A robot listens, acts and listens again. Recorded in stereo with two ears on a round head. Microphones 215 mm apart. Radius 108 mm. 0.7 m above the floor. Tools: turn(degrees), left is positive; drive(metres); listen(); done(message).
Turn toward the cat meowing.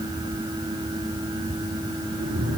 turn(degrees=-70)
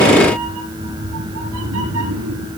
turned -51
turn(degrees=-70)
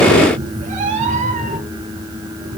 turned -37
turn(degrees=-35)
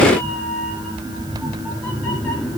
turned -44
done("Facing the cat meowing, over 4 m away.")